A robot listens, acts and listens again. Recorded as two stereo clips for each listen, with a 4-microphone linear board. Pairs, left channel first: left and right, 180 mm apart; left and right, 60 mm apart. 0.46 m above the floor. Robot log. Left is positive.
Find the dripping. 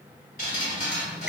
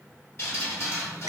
note: The dripping: about 40° left or 140° left.
cmd yaw +40
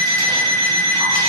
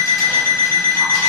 cmd idle
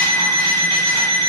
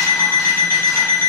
cmd idle
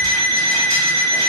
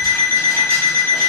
end: I heard dripping, but can't make it out now. It was about straight ahead or 100° left.